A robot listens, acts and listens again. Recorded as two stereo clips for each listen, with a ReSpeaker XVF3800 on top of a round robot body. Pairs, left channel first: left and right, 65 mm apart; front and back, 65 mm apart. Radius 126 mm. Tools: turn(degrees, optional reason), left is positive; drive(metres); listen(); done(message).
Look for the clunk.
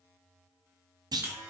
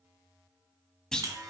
turn(degrees=-80, reason="The clunk: 80° right.")
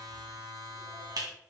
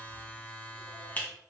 done("Facing where the clunk came from. I can't hear it now.")